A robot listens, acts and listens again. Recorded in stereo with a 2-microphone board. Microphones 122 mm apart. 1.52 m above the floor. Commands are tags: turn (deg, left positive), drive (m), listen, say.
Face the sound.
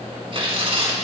<turn deg="-50"/>
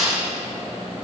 <turn deg="-80"/>
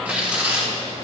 <turn deg="-10"/>
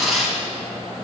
<say>Found it: tearing paper, straight ahead.</say>